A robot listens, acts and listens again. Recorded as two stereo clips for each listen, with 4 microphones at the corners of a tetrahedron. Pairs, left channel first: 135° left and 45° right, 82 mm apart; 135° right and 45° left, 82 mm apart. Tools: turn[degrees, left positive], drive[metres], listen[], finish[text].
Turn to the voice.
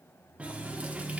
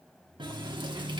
Action: listen[]
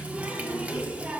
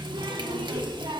Thought: The child speaking: 100° left.
Action: turn[100]
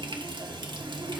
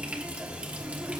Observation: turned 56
Thought: The child speaking is now 45° left.
Action: turn[45]
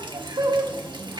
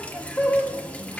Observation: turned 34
Thought: Nothing new. It was at 10° left.
Action: turn[10]
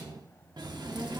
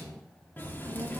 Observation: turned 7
Action: finish[Found it: a child speaking, straight ahead, 2 to 4 m away.]